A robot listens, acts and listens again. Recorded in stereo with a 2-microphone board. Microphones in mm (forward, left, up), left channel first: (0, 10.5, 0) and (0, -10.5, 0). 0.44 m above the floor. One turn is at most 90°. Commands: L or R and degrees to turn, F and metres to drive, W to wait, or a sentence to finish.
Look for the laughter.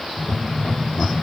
L60
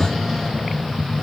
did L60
L50
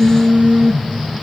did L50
W
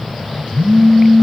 W
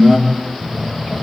R30
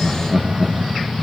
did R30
R15
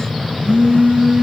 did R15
W
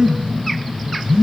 W
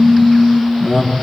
Facing the laughter.